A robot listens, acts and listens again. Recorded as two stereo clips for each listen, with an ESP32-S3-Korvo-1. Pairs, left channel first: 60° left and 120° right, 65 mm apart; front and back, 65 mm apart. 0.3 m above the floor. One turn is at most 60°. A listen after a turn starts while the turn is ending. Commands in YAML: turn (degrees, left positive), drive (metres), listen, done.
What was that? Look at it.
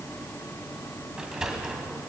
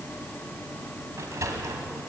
turn: 60
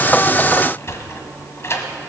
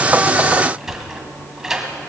turn: 60
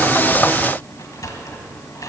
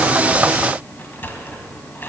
turn: 55
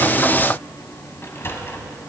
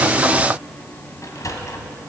turn: 15
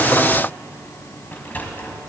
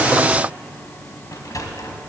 done: "Found it: a sliding door, straight ahead, 1 to 2 m away."